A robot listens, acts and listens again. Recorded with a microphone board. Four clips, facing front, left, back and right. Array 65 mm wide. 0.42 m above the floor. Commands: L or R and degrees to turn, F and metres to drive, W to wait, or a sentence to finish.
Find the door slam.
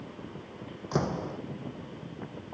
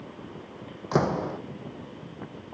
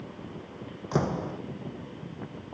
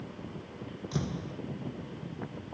L95
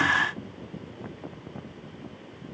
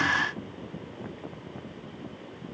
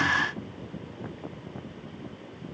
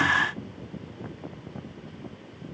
I heard a door slam from this way, but can't make it out now.